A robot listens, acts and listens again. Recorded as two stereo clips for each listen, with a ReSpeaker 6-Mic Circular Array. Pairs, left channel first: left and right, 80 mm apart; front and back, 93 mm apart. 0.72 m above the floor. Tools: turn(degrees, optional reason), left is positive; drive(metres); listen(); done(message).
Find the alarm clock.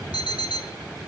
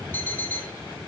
turn(degrees=70, reason="The alarm clock: 70° left.")
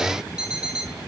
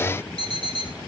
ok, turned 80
turn(degrees=-10, reason="The alarm clock is now 10° right.")
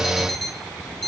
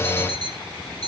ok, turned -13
done("Found it: an alarm clock, straight ahead, 2 to 4 m away.")